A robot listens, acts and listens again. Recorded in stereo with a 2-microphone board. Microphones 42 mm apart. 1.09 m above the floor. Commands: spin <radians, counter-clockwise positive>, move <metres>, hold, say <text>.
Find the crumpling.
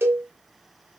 hold
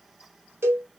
hold
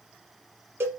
say I can't make out crumpling to turn to.